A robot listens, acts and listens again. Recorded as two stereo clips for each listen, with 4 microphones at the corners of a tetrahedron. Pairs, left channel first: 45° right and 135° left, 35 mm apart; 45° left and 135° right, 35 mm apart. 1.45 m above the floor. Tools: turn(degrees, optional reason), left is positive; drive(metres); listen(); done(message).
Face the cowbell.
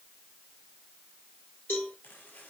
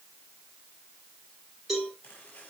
turn(degrees=-50, reason="The cowbell: 50° right.")
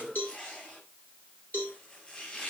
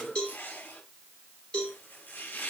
turn(degrees=-25, reason="The cowbell is now 25° right.")
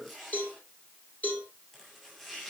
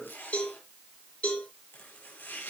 done("Facing the cowbell, over 4 m away.")